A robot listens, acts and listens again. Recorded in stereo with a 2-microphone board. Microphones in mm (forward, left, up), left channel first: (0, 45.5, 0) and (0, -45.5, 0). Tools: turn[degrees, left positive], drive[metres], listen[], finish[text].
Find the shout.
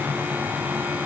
Action: listen[]
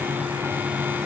Action: listen[]
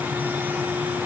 Action: finish[I can't make out a shout.]